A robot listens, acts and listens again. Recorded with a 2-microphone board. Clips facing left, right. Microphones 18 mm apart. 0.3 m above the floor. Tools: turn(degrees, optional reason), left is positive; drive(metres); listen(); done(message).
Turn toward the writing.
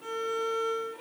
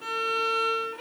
listen()
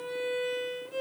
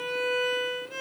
listen()
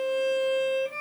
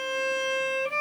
done("I can't make out writing to turn to.")